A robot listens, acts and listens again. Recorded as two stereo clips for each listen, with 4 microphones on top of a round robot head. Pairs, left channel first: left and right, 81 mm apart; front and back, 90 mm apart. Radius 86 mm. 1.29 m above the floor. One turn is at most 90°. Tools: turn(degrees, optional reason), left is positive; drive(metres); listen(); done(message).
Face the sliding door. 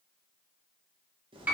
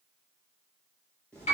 listen()
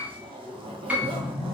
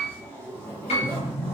turn(degrees=60, reason="The sliding door: 60° left.")
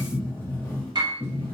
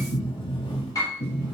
turn(degrees=20, reason="The sliding door is now 20° left.")
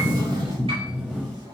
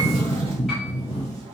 turn(degrees=-10, reason="The sliding door is now 10° right.")
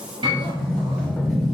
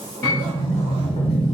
done("Facing the sliding door.")